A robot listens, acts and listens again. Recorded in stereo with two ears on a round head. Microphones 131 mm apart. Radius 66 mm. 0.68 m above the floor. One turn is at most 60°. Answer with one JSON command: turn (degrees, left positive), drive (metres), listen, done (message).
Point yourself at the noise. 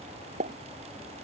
{"turn": -55}
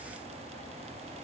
{"listen": true}
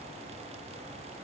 {"done": "I heard a pop, but can't make it out now. It was about straight ahead or 70° right."}